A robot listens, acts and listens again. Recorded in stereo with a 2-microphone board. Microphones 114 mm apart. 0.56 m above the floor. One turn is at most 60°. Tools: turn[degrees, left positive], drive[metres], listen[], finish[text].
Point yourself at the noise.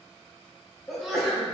Action: turn[30]
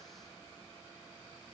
Action: listen[]
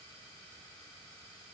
Action: finish[I heard a sneeze, but can't make it out now. It was about 30° right or 150° left.]